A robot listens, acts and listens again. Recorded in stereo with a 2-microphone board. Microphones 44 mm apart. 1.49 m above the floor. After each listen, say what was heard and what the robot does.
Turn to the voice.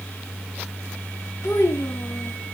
The child speaking: about 75° left or 105° left. Turn 75° left.
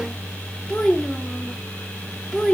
So it is at 20° left. Turn 20° left.
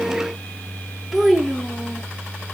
Facing the child speaking, under 1 m away.